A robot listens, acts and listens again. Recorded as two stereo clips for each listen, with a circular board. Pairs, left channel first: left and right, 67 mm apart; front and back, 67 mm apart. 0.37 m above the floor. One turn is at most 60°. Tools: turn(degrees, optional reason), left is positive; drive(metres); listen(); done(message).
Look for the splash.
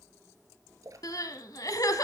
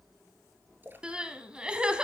turn(degrees=-60, reason="The splash: 120° right.")
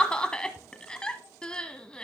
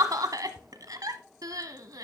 turn(degrees=-60, reason="Nothing new. It was at 60° right.")
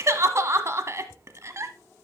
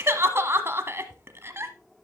done("I heard a splash from this way, but can't make it out now.")